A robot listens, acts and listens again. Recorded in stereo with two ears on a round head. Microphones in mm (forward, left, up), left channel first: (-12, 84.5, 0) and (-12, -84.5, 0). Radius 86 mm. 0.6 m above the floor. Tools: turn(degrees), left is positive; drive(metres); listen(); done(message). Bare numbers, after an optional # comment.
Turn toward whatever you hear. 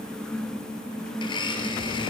# The blender: about 25° left or 155° left.
turn(25)
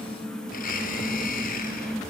# So it is at 130° left.
turn(130)
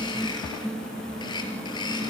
# The blender is now 25° left.
turn(25)
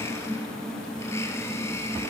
# The blender is now 15° left.
turn(15)
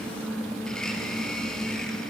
listen()
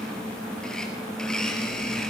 done("Found it: a blender, straight ahead.")